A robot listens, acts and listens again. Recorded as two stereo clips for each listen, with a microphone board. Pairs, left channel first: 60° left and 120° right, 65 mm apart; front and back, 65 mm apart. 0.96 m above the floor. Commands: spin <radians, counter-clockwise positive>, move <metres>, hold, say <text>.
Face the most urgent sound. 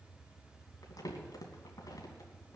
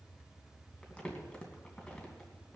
hold
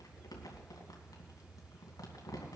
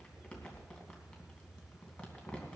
hold
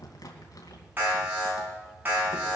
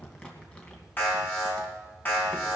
spin -1.05
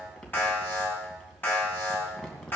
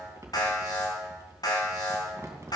say Found it: an alarm, straight ahead.